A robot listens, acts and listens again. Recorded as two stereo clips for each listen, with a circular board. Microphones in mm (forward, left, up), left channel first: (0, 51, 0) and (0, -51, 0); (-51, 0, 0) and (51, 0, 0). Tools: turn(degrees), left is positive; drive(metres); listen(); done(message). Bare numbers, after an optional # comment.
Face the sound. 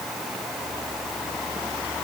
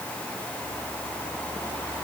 listen()
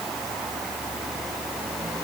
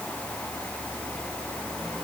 listen()
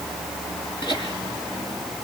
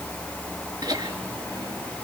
# The laughter: 50° left.
turn(50)
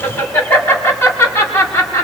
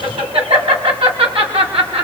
# The laughter is now 20° left.
turn(20)
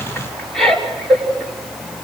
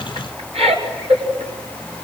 done("Found it: laughter, straight ahead.")